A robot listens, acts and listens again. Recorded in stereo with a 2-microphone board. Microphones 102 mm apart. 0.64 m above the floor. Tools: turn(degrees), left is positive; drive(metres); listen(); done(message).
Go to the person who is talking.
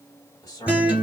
turn(degrees=30)
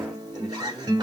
drive(metres=1.0)
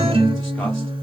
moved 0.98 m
listen()
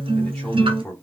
drive(metres=1.0)
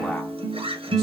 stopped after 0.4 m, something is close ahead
listen()
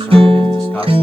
listen()
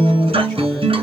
done("I heard a man speaking from this way, but can't make it out now. I did not reach it.")